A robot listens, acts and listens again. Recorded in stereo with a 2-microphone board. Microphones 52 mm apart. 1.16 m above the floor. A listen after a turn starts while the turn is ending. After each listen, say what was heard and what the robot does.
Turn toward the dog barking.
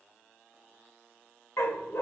The dog barking: about 60° left or 120° left. Turn 60° left.
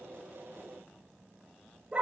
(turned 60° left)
So it is at 25° right. Turn 25° right.
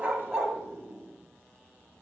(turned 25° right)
The dog barking is now 20° right. Turn 20° right.
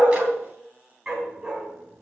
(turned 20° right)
The dog barking is now 15° right. Turn 15° right.
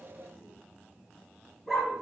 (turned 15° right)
Facing the dog barking.